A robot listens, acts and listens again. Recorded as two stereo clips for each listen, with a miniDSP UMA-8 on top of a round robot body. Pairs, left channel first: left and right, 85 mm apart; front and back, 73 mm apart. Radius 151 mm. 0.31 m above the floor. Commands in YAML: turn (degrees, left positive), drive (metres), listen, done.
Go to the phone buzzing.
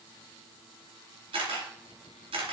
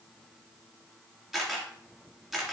listen: true
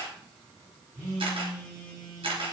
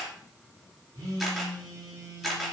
turn: -140
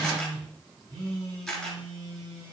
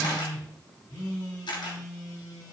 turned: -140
turn: -40
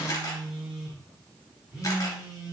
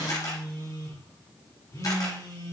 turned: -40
turn: -10
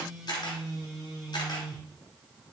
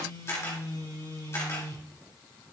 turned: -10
drive: 1.0
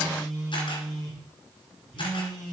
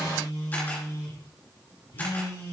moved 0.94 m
drive: 1.0
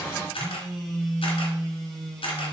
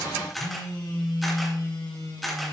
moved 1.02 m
turn: 10
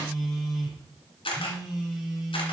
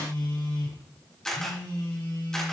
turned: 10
drive: 1.0
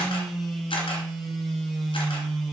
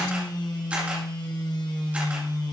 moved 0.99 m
drive: 1.0
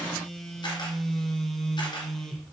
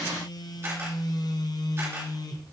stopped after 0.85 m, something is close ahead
done: "I am next to the phone buzzing."